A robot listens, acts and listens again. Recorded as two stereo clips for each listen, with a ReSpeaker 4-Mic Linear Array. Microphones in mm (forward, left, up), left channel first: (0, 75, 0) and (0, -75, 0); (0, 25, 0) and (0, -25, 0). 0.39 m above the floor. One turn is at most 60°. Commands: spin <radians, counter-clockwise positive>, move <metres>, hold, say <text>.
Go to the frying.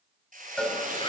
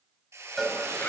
spin -1.05
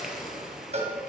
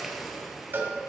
move 1.0
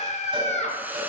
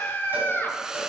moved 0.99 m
hold
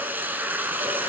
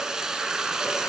spin -0.26
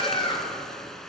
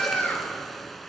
move 1.0
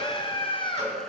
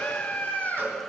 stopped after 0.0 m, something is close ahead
hold
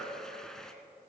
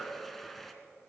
hold
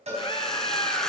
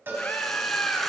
say I heard frying from this way, but can't make it out now. I did not reach it.